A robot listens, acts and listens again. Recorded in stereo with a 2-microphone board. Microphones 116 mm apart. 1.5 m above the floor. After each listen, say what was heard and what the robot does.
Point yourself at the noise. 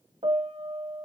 The piano: about 55° right or 125° right. Turn 55° right.
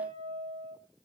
So it is at 65° right. Turn 65° right.
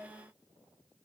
Keep listening.
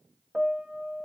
Facing the piano, 1 to 2 m away.